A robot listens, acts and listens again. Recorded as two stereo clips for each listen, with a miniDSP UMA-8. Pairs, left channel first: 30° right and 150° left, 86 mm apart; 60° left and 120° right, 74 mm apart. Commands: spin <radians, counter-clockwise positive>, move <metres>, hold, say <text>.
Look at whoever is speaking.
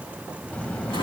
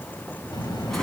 spin 0.87
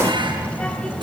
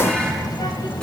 spin 0.87
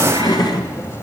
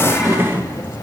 spin 0.44
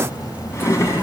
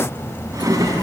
spin 0.26
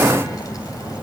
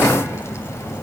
spin 0.26
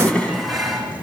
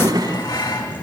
spin 0.17
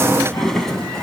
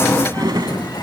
hold
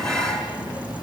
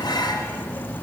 say Facing the child speaking.